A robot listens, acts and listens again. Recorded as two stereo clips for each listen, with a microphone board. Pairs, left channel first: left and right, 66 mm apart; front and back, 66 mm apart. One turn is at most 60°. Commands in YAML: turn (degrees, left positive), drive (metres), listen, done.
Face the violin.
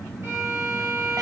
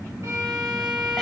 turn: -60
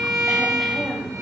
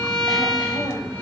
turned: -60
turn: -55
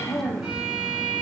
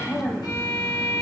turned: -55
turn: -10
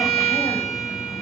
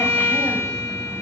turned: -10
done: "Found it: a violin, straight ahead, 2 to 4 m away."